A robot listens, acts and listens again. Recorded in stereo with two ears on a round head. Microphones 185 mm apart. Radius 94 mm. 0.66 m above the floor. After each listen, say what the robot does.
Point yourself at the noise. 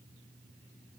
Keep listening.
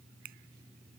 Keep listening.
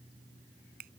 Turn 50° right.
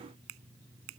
Turn 80° right.
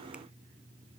Keep listening.
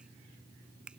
Found it: a finger snap, straight ahead.